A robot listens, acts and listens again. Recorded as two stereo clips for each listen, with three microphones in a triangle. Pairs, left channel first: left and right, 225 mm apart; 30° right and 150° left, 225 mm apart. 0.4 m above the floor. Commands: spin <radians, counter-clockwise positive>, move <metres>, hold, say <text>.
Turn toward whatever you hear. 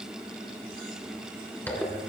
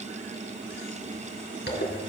spin 0.17
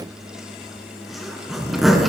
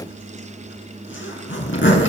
say Facing the zipper.